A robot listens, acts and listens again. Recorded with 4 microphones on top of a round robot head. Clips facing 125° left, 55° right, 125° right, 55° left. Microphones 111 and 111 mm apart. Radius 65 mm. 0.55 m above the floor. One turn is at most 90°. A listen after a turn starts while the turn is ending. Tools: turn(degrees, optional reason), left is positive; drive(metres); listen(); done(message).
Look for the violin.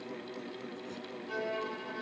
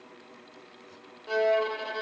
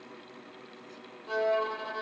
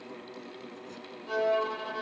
turn(degrees=-35, reason="The violin: 35° right.")
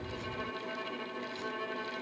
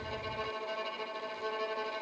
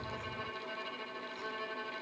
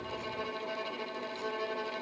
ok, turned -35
done("Facing the violin.")